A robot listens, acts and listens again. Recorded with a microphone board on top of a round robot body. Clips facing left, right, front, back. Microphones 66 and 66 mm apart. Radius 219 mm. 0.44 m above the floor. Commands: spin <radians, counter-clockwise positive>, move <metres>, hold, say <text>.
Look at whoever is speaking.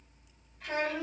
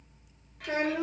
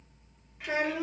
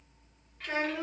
spin -1.31
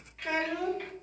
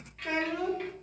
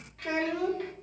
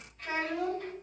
say Facing the child speaking.